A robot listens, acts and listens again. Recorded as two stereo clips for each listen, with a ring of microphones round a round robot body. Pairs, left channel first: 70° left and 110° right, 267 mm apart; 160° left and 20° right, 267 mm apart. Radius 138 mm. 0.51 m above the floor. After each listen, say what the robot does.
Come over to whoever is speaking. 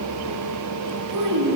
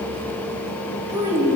Turn 100° right.
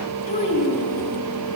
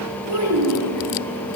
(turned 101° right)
Drive 1.0 m forward.
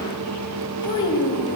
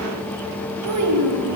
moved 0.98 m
Drive 1.0 m forward.
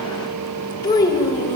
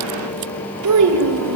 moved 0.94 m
Turn 10° right.
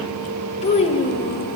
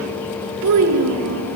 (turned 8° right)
Drive 1.0 m forward.
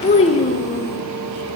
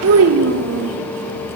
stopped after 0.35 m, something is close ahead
Arrived at the child speaking, straight ahead.